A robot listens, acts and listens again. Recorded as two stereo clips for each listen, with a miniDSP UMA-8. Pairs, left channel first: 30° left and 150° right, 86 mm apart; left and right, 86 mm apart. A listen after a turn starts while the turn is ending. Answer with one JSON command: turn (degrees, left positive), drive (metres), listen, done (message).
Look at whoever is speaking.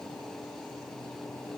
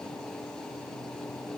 {"listen": true}
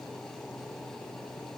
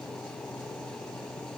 {"listen": true}
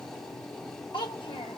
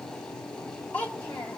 {"turn": 20}
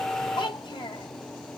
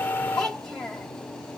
{"done": "Facing the child speaking."}